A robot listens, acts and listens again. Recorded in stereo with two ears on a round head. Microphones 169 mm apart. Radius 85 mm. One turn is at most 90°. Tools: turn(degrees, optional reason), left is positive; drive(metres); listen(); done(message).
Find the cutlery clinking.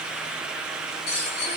turn(degrees=50, reason="The cutlery clinking: about 50° left or 130° left.")
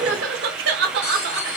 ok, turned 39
turn(degrees=90, reason="So it is at 90° left.")
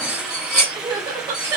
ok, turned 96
done("Facing the cutlery clinking, 1 to 2 m away.")